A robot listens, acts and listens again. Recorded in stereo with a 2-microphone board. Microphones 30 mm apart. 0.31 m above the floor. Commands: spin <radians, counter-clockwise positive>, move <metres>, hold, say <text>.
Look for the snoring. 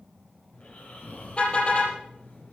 spin 0.96
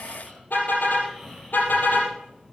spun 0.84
spin 0.17
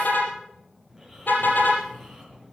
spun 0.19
say Facing the snoring, over 4 m away.